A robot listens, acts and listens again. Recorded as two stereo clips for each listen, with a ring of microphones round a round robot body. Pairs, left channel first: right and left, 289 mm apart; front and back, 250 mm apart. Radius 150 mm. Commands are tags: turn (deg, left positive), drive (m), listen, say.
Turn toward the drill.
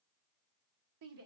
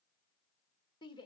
<listen/>
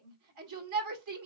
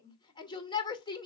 <listen/>
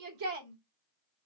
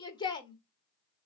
<say>I can't make out a drill to turn to.</say>